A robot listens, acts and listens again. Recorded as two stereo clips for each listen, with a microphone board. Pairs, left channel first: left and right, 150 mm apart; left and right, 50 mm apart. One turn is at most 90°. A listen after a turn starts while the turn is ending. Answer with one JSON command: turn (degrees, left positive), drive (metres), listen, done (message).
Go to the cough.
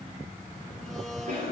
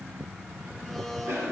{"turn": -75}
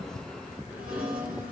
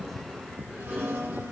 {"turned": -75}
{"turn": -10}
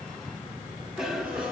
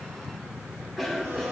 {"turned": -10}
{"drive": 1.0}
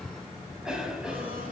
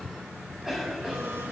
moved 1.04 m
{"drive": 1.0}
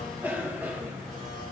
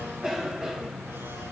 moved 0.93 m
{"turn": -15}
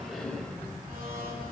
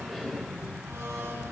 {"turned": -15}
{"drive": 1.0}
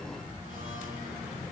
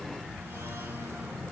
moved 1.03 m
{"listen": true}
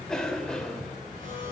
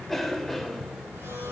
{"drive": 1.0}
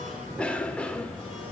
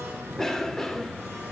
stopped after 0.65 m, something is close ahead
{"turn": 15}
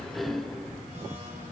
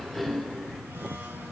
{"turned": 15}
{"done": "I am next to the cough."}